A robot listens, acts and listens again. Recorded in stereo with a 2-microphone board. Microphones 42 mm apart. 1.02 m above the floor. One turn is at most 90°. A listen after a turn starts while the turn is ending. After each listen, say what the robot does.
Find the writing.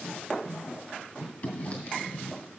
Turn 35° left.
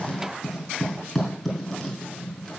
Facing the writing.